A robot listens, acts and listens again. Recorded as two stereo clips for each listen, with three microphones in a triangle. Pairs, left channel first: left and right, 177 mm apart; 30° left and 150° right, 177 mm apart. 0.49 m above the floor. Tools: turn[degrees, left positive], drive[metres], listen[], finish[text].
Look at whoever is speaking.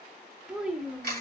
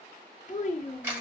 Action: finish[Facing the child speaking.]